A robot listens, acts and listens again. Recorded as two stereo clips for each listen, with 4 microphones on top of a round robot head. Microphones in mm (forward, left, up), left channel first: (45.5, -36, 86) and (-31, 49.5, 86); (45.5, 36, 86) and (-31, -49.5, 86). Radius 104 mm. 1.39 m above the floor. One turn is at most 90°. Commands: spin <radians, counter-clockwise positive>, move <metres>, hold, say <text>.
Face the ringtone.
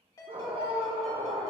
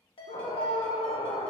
spin 0.17
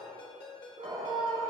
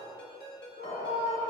say Found it: a ringtone, straight ahead, 1 to 2 m away.